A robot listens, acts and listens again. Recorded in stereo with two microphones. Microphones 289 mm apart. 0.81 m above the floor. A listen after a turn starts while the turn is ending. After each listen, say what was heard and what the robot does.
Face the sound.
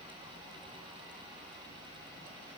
Keep listening.
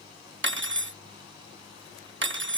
The cutlery clinking: about 45° right or 135° right. Turn 45° right.
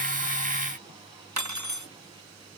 So it is at 90° right. Turn 90° right.
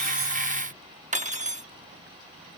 The cutlery clinking is now 25° right. Turn 25° right.
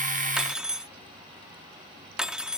Facing the cutlery clinking.